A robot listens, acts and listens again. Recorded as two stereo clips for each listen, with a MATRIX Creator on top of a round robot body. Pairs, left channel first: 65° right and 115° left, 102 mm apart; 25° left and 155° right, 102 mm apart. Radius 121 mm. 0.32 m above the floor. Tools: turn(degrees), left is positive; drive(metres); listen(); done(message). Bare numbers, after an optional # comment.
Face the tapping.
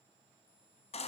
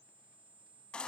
listen()
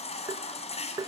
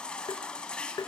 # The tapping: 65° left.
turn(65)
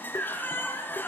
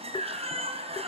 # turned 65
listen()
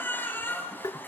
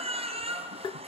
# The tapping is now 15° right.
turn(-15)
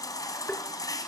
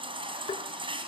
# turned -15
done("Found it: tapping, straight ahead.")